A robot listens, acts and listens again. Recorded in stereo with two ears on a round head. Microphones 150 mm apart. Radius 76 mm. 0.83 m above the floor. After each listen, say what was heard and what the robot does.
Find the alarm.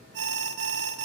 Turn 90° right.
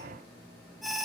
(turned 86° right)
Facing the alarm.